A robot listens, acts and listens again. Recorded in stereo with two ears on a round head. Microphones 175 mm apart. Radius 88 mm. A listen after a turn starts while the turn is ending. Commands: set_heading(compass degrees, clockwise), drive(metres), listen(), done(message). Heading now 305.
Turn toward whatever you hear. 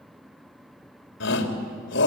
set_heading(230)
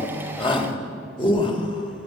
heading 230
set_heading(200)
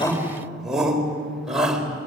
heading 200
done("Facing the shout.")